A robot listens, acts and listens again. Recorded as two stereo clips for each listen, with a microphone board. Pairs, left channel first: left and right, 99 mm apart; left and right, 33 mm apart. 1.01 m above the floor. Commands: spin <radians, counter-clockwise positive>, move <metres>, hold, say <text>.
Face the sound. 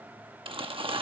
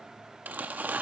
spin -1.13
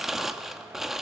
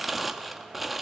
say Facing the crumpling, 1 to 2 m away.